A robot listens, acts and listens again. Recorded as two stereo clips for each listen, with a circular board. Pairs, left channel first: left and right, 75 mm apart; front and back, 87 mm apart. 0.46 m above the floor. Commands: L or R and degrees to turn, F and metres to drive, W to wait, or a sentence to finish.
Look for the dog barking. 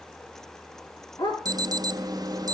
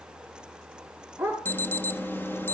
L110
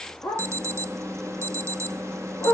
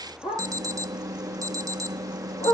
L20
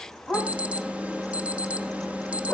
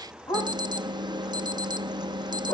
Facing the dog barking, over 4 m away.